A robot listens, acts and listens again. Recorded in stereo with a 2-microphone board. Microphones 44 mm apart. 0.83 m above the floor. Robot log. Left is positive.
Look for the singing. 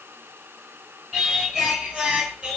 note: The singing: about 20° right or 160° right.
cmd yaw -20
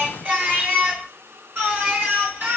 note: So it is at 130° right.
cmd yaw -130
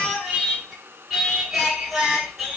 note: The singing is now 10° right.
cmd yaw -10
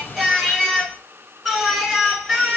end: Facing the singing, over 4 m away.